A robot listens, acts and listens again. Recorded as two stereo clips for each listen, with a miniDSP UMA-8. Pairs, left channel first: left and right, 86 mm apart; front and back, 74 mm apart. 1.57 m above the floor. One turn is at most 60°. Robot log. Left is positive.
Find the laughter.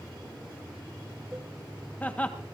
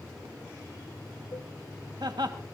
note: The laughter: 165° left.
cmd yaw +60
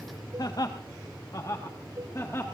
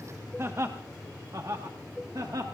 note: The laughter is now 145° left.
cmd yaw +60
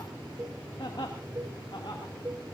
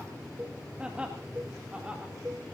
note: The laughter is now 110° left.
cmd yaw +60
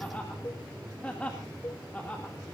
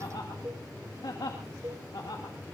note: The laughter is now 15° left.
cmd yaw +15
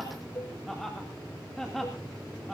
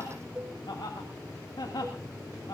end: Facing the laughter, 2 to 4 m away.